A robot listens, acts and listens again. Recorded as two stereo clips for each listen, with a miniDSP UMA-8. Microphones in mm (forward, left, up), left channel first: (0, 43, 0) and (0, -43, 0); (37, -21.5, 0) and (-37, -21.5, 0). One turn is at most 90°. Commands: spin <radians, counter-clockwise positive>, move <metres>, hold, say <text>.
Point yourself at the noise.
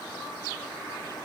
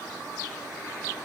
hold
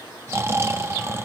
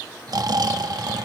spin -1.57
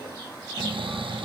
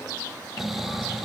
spin -1.57
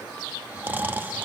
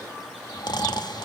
spin -0.35
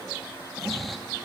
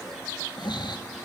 say Facing the snoring, under 1 m away.